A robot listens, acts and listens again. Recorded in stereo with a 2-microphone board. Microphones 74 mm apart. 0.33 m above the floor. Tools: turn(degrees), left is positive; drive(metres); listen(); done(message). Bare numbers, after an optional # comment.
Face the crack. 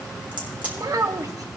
# The crack: about 20° right or 160° right.
turn(-20)
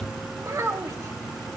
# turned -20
listen()
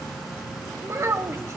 done("I heard a crack, but can't make it out now. It was about straight ahead or 140° right.")